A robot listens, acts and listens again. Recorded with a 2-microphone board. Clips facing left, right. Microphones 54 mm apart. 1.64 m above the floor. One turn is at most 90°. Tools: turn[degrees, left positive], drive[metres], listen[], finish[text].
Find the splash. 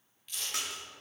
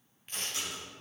Action: turn[90]
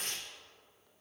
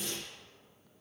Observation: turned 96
Action: finish[I heard a splash from this way, but can't make it out now.]